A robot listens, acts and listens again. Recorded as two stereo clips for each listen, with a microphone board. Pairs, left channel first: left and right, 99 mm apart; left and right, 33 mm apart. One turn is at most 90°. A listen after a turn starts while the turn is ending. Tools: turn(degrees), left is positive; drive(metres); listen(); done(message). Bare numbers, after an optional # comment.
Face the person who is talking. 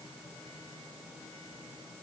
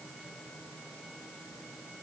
listen()
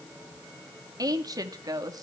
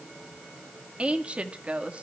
# The woman speaking: about 40° right or 140° right.
turn(-40)
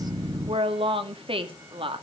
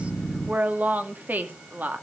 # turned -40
# So it is at 95° right.
turn(-90)
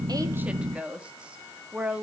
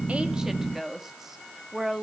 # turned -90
# The woman speaking is now 15° right.
turn(-15)
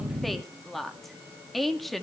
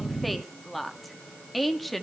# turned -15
done("Found it: a woman speaking, straight ahead.")